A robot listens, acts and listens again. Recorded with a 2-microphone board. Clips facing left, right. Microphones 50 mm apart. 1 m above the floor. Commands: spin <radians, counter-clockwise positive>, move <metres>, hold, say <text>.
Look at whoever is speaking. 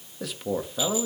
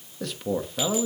spin 0.52
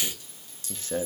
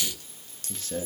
spin 2.53
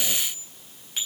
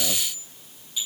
hold
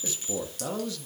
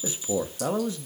spin -0.52
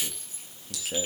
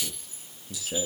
say Facing the man speaking.